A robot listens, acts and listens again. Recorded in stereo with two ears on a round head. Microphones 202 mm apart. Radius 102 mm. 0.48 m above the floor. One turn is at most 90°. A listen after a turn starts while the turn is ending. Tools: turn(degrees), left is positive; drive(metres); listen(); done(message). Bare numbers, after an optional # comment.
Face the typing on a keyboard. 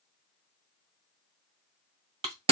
listen()
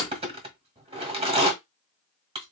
listen()
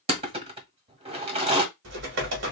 # The typing on a keyboard: about 55° right or 125° right.
turn(-55)
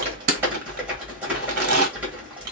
done("Facing the typing on a keyboard.")